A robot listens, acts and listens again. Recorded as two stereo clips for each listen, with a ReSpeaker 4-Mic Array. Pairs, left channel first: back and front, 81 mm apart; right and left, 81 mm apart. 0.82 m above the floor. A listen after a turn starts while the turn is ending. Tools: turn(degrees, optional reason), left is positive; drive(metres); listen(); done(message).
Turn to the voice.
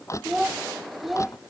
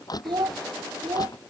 turn(degrees=90, reason="The child speaking: 90° left.")
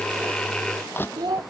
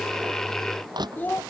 turn(degrees=-25, reason="The child speaking is now 25° right.")
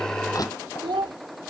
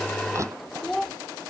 done("Found it: a child speaking, straight ahead.")